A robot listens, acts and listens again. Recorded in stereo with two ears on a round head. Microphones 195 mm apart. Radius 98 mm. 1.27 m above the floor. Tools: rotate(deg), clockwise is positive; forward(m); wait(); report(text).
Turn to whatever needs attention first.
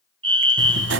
rotate(25)
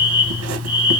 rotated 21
rotate(10)
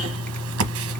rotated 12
wait()
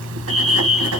report("Facing the fire alarm, 1 to 2 m away.")